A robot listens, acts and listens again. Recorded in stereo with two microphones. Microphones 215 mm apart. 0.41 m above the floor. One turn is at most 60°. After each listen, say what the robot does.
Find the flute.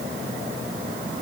Keep listening.
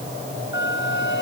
Turn 60° left.
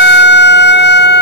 Turn 55° left.
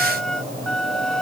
Found it: a flute, straight ahead.